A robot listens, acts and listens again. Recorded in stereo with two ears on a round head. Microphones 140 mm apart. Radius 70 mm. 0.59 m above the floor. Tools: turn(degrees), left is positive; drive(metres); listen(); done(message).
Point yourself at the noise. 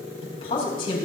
turn(degrees=30)
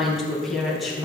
done("Found it: a woman speaking, straight ahead.")